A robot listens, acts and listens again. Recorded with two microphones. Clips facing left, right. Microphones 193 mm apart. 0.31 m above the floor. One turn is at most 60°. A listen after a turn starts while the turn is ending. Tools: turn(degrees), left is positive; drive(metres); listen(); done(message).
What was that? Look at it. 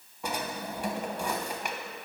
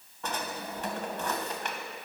turn(degrees=30)
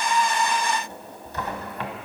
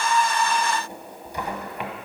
turn(degrees=-15)
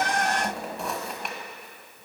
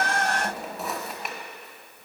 done("Facing the drawer.")